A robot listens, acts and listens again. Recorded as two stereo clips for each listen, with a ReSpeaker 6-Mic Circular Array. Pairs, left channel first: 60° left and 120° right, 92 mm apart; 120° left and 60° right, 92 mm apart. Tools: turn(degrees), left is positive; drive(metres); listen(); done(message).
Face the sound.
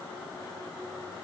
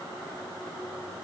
listen()
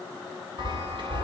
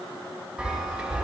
turn(degrees=-140)
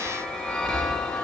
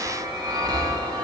turn(degrees=-20)
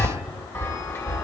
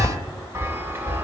done("Facing the chime.")